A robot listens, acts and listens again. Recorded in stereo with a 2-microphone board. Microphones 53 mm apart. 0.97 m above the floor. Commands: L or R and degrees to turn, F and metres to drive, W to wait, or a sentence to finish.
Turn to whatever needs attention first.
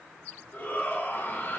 L45
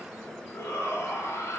L90
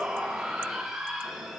R10
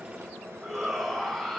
Found it: a shout, straight ahead, over 4 m away.